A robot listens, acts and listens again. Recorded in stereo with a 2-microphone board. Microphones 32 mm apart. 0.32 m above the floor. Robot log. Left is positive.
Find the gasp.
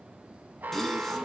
cmd yaw +30
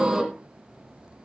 note: So it is at 20° right.
cmd yaw -20
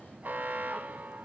end: I heard a gasp from this way, but can't make it out now.